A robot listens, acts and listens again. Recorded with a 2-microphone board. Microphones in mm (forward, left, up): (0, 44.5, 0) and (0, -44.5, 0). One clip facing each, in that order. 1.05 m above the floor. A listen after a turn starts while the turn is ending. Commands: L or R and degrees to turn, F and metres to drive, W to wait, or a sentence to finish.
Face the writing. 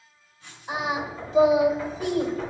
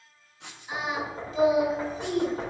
R90
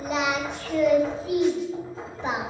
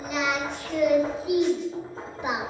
W
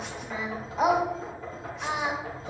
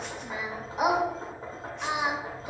W
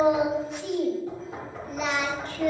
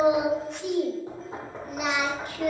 I heard writing from this way, but can't make it out now.